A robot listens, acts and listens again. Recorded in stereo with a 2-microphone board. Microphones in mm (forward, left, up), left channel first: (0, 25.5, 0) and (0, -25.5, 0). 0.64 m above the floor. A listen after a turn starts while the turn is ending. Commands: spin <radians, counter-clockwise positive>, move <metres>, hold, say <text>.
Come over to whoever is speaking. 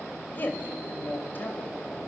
spin 0.70
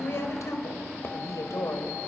spin 1.75
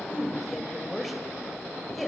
move 1.0
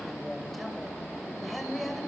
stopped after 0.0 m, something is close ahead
say Blocked. The woman speaking is further on, straight ahead.